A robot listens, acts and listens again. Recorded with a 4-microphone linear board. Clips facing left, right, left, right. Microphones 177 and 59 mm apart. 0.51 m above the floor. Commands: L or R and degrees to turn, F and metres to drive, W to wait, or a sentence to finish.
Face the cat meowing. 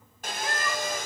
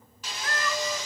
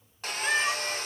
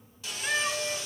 L15
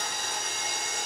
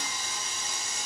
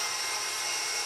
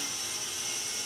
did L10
W
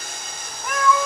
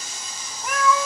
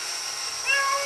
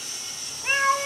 R30
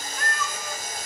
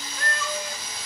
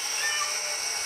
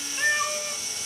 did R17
R30
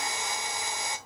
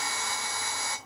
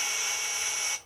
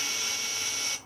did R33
W
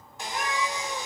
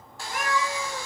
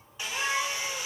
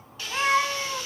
R95
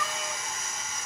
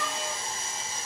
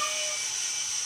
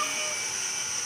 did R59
R35
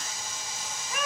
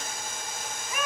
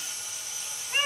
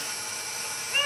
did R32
Found it: a cat meowing, straight ahead, 2 to 4 m away.